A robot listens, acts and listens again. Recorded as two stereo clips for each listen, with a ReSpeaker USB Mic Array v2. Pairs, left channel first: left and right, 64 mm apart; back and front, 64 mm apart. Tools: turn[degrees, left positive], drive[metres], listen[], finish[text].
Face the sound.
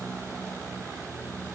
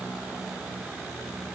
Action: listen[]
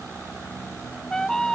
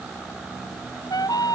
Thought: The trumpet: 170° left.
Action: turn[170]
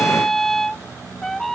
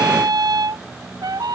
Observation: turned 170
Action: finish[Found it: a trumpet, straight ahead.]